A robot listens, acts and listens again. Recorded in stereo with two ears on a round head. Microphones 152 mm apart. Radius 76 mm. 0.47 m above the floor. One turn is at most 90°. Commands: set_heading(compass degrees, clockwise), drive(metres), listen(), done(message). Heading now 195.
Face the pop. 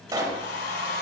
set_heading(220)
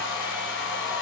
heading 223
listen()
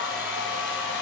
done("I heard a pop, but can't make it out now. It was about 5° left or 130° right.")